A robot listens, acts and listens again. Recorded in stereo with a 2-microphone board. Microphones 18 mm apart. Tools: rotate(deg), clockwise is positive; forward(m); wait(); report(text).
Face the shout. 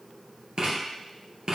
wait()
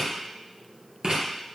wait()
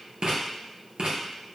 report("I can't make out a shout, only writing.")